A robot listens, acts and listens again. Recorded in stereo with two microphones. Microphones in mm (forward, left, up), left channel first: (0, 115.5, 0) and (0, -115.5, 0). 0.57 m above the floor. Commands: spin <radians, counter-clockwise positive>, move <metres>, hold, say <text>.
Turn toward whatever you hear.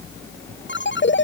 spin 0.96
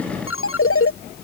spin 1.22
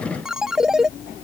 say Found it: a ringtone, straight ahead.